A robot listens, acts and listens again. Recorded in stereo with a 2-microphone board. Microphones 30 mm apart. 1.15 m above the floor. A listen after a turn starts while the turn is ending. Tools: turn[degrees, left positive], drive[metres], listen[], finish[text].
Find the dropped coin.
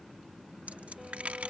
Thought: The dropped coin: about 40° right or 140° right.
Action: turn[-40]
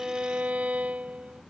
Action: listen[]
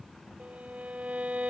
Action: finish[I heard a dropped coin, but can't make it out now. It was about straight ahead or 100° right.]